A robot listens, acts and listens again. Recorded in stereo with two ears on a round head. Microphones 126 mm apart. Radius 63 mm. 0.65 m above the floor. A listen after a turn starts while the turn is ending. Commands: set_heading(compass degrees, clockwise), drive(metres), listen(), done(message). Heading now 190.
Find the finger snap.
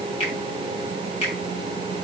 set_heading(145)
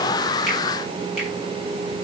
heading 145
listen()
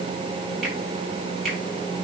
done("Found it: a finger snap, straight ahead.")